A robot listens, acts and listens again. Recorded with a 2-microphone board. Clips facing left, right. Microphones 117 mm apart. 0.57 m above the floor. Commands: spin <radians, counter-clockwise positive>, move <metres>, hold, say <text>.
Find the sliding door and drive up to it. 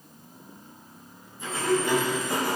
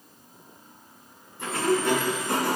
spin -1.57
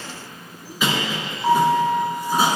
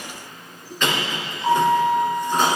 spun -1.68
spin 0.17
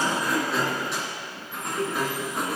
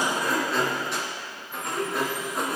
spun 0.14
move 1.0
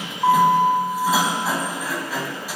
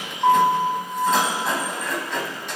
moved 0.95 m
move 1.0
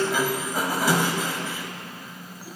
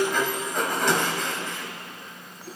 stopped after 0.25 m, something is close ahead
say I am next to the sliding door.